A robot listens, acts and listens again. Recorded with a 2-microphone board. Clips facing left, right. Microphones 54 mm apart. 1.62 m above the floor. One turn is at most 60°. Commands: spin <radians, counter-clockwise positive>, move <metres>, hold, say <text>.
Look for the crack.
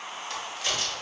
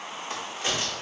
spin -0.35
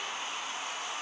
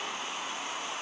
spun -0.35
hold
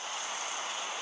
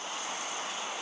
say I heard a crack, but can't make it out now. It was about straight ahead or 140° right.